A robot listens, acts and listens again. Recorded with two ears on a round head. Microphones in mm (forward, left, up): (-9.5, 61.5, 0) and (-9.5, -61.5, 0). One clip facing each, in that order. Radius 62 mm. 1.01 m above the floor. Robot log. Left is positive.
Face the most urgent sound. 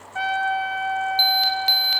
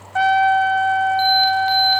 note: The alarm: about 50° left or 130° left.
cmd yaw +50
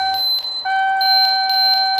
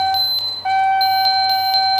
end: Facing the alarm.